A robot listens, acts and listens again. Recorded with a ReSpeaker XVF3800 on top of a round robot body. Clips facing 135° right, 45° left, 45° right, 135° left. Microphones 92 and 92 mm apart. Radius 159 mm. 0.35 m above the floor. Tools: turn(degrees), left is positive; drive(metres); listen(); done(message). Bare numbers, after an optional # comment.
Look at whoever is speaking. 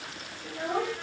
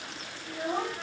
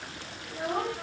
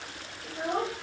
# The child speaking: 170° right.
turn(-170)
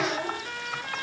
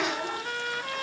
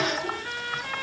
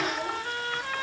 listen()
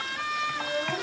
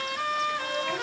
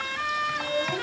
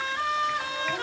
# The child speaking is now 70° right.
turn(-70)
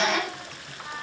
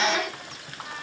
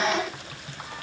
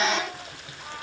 listen()
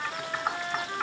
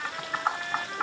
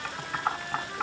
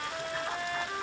listen()
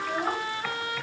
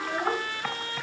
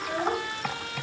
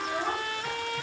# The child speaking is now 10° left.
turn(10)
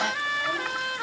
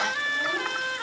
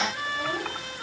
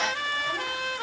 listen()
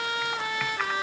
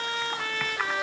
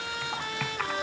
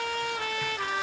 listen()
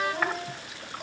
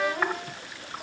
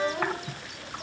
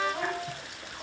done("Facing where the child speaking came from. I can't hear it now.")